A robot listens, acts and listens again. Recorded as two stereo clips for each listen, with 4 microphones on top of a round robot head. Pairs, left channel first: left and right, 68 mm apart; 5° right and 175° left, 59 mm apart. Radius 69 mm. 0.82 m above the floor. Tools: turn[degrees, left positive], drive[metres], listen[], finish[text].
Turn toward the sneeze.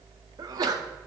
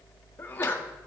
Thought: The sneeze: 70° right.
Action: turn[-70]
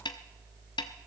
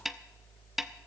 Action: finish[Facing where the sneeze came from. I can't hear it now.]